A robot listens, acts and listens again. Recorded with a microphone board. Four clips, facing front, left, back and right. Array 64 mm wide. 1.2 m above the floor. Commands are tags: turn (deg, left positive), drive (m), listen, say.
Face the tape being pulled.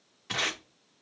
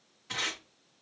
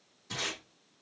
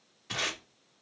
<say>Facing the tape being pulled.</say>